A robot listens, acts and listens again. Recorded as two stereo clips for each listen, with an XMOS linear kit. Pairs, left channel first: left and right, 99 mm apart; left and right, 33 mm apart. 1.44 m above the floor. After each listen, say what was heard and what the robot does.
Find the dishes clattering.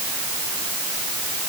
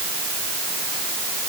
Keep listening.
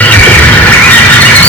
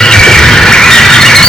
Keep listening.
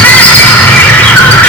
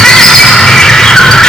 I can't make out dishes clattering, only a bird.